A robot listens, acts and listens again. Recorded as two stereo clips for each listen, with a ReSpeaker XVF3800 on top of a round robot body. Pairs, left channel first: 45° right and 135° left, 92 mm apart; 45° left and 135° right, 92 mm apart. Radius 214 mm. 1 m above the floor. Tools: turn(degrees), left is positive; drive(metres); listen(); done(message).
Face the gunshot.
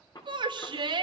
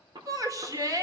turn(degrees=-95)
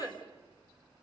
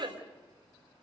done("Facing where the gunshot came from. I can't hear it now.")